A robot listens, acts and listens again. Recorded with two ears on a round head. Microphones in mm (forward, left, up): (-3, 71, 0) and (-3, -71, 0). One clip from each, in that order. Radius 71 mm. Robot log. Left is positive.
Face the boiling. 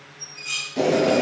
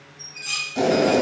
note: The boiling: about 45° right or 135° right.
cmd yaw -45
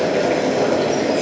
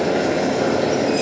end: Facing the boiling, 1 to 2 m away.